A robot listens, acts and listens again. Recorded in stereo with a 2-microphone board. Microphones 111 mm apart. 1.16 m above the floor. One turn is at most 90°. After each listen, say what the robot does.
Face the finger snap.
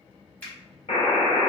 Turn 30° left.
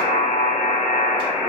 Keep listening.
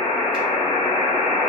Keep listening.
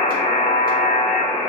I heard a finger snap, but can't make it out now. It was about 15° right or 135° left.